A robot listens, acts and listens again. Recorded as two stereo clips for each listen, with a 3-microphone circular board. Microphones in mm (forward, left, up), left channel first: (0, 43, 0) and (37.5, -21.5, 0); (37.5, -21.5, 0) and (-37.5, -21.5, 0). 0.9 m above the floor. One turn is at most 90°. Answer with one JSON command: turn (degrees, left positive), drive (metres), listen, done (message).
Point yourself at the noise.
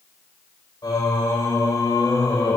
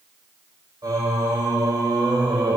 {"turn": 90}
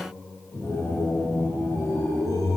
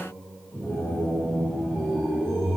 {"turn": 85}
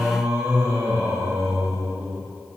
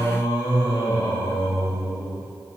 {"done": "Facing the singing."}